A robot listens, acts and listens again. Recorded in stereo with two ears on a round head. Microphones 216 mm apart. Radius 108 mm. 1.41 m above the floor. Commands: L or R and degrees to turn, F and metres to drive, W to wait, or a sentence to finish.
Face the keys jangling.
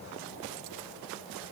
W
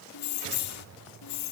L90
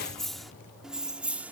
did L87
Facing the keys jangling.